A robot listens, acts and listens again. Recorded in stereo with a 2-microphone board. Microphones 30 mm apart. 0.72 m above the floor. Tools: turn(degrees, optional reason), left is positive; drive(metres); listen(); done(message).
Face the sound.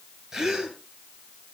turn(degrees=-25, reason="The gasp: about 25° right or 155° right.")
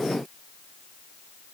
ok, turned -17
listen()
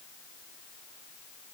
done("I heard a gasp, but can't make it out now. It was about 5° right or 140° right.")